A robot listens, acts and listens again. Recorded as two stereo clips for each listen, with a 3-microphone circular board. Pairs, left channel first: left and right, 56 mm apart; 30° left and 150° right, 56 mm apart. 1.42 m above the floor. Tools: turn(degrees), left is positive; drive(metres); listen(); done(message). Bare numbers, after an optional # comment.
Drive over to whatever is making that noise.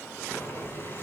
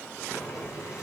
# The boiling: 45° left.
turn(45)
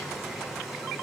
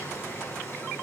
drive(1.0)
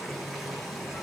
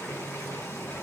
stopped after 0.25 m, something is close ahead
done("Blocked. The boiling is further on, straight ahead.")